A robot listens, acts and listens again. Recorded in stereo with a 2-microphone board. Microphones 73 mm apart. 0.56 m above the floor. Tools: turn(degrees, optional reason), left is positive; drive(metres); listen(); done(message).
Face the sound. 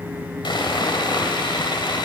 turn(degrees=90)
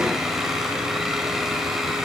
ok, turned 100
turn(degrees=-10, reason="Nothing new. It was at 10° right.")
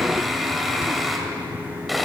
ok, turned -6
done("Facing the sawing.")